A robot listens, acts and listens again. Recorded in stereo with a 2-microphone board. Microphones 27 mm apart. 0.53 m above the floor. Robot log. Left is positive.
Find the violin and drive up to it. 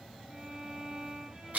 note: The violin: about 25° right or 155° right.
cmd yaw -25
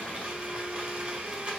cmd idle
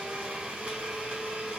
cmd idle
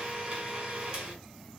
end: I heard a violin, but can't make it out now. It was about straight ahead or 130° right. I did not reach it.